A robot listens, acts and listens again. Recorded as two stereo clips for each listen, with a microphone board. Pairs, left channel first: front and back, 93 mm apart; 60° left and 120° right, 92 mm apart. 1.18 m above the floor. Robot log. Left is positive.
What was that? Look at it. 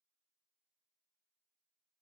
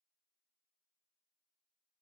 cmd idle
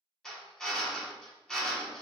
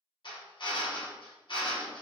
note: The drill: 85° left.
cmd yaw +85
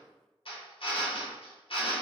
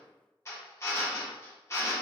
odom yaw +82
end: Found it: a drill, straight ahead.